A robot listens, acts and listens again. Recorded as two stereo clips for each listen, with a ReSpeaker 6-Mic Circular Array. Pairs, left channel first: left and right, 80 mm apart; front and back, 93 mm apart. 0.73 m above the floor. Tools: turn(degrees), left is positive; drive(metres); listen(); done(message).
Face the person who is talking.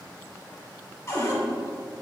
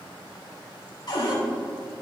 listen()
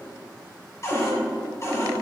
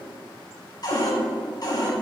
listen()
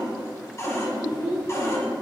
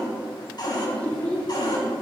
turn(degrees=70)
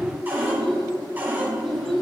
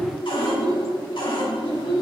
done("Facing the child speaking, 2 to 4 m away.")